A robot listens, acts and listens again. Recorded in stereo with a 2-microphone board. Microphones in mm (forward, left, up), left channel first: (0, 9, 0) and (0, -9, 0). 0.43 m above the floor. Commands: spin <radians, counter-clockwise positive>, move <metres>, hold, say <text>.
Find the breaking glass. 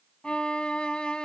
hold
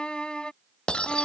spin 1.31
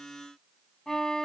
hold
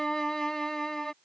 say I heard breaking glass, but can't make it out now. It was about straight ahead or 30° left.